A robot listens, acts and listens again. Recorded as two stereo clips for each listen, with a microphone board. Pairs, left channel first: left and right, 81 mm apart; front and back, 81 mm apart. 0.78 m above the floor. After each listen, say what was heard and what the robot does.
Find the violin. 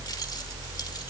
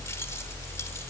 Keep listening.
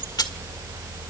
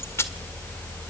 Keep listening.
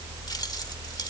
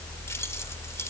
I can't make out a violin, only keys jangling.